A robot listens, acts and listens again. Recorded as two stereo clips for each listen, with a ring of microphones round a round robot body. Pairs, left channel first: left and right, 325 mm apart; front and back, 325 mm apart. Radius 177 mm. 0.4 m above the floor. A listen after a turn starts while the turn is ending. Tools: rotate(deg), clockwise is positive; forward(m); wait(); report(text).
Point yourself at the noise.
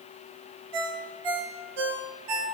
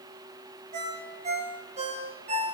rotate(105)
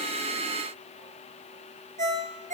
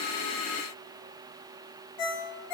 rotate(20)
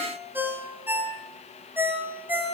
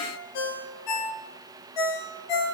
report("Facing the ringtone, 2 to 4 m away.")